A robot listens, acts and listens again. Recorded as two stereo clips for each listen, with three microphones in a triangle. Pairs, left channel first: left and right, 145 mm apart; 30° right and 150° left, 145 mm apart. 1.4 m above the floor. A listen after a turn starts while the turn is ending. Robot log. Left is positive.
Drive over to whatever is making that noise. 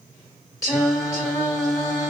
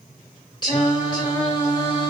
note: The singing: 25° left.
cmd yaw +25
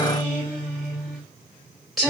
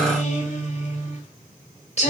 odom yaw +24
cmd fwd 1.0
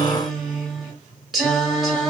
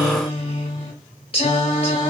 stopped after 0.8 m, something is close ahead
end: Arrived at the singing, straight ahead.